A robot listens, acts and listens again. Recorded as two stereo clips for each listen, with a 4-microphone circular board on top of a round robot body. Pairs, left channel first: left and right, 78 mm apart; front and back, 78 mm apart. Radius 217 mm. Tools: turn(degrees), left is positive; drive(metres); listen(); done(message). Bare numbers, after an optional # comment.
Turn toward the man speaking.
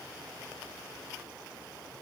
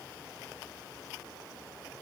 listen()
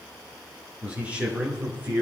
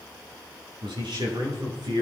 # The man speaking: 160° right.
turn(-160)
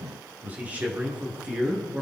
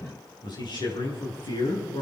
# The man speaking is now 15° right.
turn(-15)
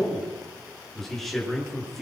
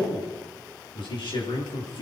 done("Facing the man speaking, over 4 m away.")